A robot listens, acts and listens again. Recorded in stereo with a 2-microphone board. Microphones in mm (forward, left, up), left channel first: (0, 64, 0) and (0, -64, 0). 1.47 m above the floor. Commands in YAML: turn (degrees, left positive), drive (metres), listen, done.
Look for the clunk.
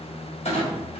turn: 60
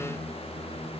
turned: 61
listen: true
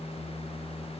done: "I heard a clunk, but can't make it out now. It was about 5° right or 60° left."